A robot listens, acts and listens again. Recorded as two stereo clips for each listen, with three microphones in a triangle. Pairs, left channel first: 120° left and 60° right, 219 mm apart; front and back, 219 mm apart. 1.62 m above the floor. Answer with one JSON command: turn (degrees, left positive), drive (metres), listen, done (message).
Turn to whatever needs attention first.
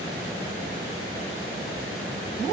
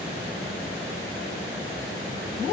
{"listen": true}
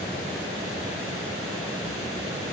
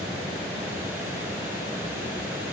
{"listen": true}
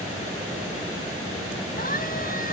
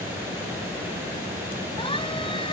{"turn": 70}
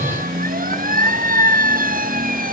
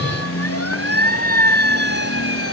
{"done": "Facing the siren."}